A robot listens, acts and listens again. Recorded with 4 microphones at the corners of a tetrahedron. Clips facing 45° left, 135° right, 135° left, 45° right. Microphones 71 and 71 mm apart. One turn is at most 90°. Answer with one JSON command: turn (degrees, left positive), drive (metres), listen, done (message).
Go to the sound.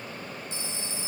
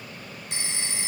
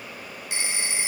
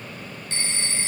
{"turn": -90}
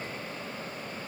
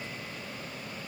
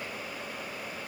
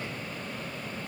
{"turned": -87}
{"turn": -60}
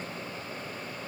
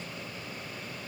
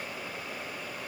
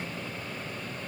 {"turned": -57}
{"listen": true}
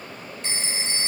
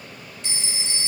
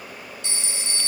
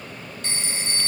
{"drive": 1.0}
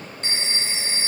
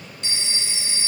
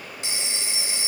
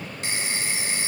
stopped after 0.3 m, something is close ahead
{"done": "Something is in my way. I am facing the phone ringing but have not reached it."}